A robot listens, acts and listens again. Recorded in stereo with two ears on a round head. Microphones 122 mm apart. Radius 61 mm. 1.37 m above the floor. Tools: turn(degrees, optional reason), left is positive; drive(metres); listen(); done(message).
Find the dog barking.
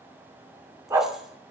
turn(degrees=-20, reason="The dog barking: about 20° right or 160° right.")
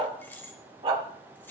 turn(degrees=-135, reason="So it is at 135° right.")
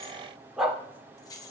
done("Found it: a dog barking, straight ahead.")